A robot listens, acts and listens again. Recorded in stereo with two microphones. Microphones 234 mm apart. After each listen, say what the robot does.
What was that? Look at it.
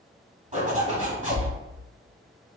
Turn 30° right.
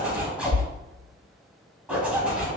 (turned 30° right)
Found it: a zipper, straight ahead.